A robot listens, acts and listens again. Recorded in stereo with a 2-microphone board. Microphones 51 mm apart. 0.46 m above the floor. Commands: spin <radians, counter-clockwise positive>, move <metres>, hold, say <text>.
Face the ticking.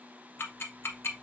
spin 0.87
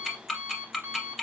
say Facing the ticking.